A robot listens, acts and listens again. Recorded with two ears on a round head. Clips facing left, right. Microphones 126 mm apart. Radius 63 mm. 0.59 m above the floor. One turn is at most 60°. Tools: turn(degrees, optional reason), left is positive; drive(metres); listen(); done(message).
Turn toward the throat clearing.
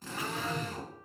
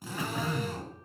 turn(degrees=-60)
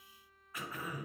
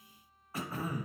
turn(degrees=-30, reason="So it is at 30° right.")
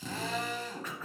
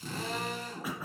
turn(degrees=-10, reason="The throat clearing is now 10° right.")
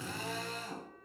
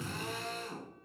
listen()
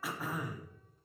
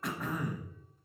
done("Facing the throat clearing, 1 to 2 m away.")